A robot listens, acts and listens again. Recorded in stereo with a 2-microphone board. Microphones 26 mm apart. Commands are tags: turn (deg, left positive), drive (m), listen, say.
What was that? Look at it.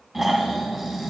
<turn deg="-30"/>
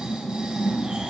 <turn deg="-140"/>
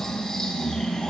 <turn deg="20"/>
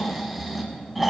<say>Found it: snoring, straight ahead.</say>